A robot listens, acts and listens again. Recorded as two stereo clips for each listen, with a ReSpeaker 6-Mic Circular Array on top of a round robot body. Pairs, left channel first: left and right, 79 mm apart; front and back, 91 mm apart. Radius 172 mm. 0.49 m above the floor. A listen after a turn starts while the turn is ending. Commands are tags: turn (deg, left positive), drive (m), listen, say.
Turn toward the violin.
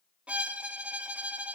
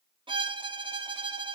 <turn deg="-165"/>
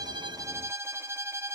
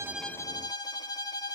<turn deg="-35"/>
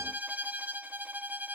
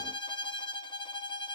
<turn deg="-25"/>
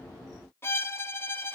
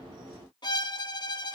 <turn deg="30"/>
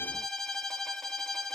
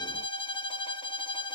<say>Found it: a violin, straight ahead, 1 to 2 m away.</say>